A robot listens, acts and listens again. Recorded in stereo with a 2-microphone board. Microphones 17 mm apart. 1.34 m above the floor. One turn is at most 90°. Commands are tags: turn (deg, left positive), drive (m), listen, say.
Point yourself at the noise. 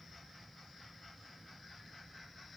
<listen/>
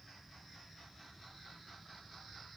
<listen/>
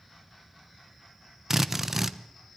<turn deg="-20"/>
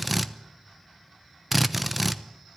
<say>Found it: a drill, straight ahead.</say>